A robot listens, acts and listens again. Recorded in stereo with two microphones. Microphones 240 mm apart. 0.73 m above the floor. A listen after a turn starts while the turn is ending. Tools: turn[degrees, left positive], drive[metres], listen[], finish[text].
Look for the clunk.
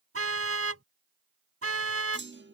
Thought: The clunk: about 55° right or 125° right.
Action: turn[-55]
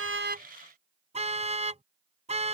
Action: listen[]
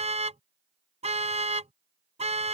Action: finish[I heard a clunk, but can't make it out now. It was about straight ahead or 70° right.]